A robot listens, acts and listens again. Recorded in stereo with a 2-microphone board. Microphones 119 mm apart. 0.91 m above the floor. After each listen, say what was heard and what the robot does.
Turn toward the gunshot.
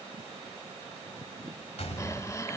The gunshot: about 65° left or 115° left. Turn 65° left.
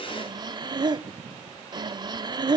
Keep listening.
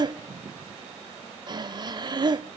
I heard a gunshot, but can't make it out now. It was about straight ahead or 50° left.